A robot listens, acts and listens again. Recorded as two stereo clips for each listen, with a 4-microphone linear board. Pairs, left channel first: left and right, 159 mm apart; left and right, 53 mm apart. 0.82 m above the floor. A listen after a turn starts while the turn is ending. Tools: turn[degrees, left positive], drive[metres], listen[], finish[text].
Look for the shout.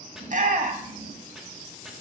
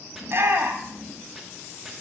Thought: The shout: about 55° right or 125° right.
Action: turn[-55]
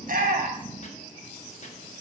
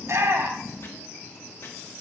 Action: listen[]
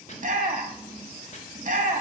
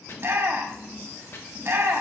Thought: So it is at 65° right.
Action: turn[-65]
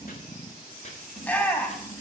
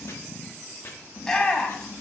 Thought: The shout is now 10° left.
Action: turn[10]
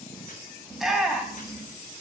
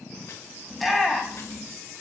Action: finish[Found it: a shout, straight ahead, 1 to 2 m away.]